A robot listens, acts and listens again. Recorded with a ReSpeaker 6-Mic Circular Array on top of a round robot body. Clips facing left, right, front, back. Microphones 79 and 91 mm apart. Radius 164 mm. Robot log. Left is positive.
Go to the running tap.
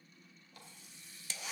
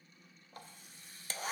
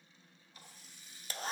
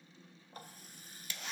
note: The running tap: 135° right.
cmd yaw -135
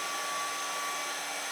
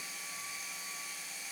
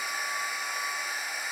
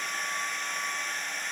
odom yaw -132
cmd idle
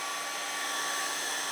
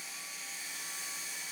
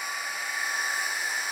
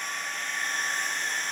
cmd idle
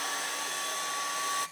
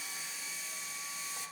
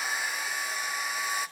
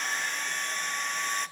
end: Facing where the running tap came from. I can't hear it now. I did not reach it.